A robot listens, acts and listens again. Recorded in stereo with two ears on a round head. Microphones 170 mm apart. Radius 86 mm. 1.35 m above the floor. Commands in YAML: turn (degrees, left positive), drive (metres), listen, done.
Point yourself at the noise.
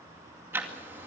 turn: -30
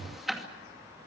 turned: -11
done: "Found it: ticking, straight ahead."